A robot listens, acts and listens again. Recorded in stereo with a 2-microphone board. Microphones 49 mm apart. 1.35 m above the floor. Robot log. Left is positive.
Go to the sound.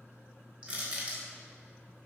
note: The crushing: about 25° right or 155° right.
cmd yaw -25
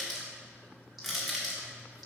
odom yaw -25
cmd fwd 1.0
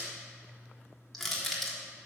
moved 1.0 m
cmd fwd 1.0
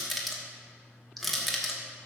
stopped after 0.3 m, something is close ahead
end: Arrived at the crushing, straight ahead.